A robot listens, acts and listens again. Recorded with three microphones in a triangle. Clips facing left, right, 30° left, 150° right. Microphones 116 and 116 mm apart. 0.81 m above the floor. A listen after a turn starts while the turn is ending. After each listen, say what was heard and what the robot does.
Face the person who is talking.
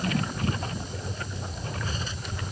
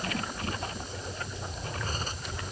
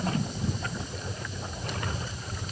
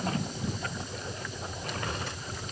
Keep listening.
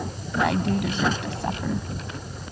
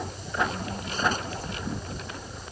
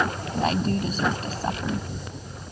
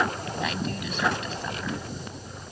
The woman speaking: 80° left. Turn 80° left.
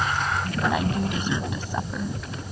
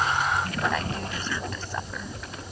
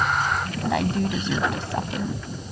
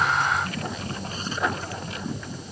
The woman speaking is now 15° left. Turn 15° left.
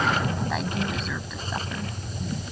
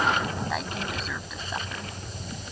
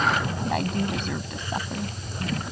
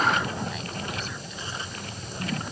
Keep listening.
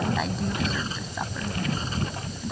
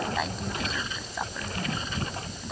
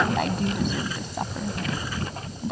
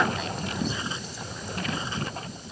Facing the woman speaking.